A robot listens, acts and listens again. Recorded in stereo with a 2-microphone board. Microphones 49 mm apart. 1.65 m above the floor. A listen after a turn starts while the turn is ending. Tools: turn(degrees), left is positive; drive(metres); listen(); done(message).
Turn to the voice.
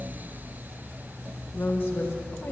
turn(degrees=60)
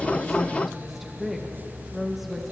done("Found it: a woman speaking, straight ahead.")